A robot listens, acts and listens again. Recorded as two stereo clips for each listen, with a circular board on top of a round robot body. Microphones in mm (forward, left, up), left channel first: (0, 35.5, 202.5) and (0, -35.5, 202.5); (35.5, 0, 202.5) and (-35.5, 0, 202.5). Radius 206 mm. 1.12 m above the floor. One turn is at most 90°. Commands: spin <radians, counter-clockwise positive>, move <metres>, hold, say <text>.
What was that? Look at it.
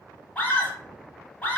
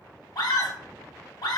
spin 0.35
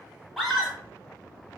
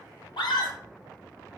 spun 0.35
say Found it: a scream, straight ahead.